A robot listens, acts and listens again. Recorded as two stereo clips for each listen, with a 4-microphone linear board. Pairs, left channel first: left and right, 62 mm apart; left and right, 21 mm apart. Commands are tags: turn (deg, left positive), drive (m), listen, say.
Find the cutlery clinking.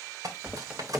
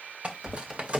<turn deg="-75"/>
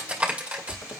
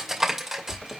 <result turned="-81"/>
<turn deg="-25"/>
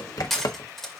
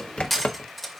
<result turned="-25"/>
<say>Found it: cutlery clinking, straight ahead.</say>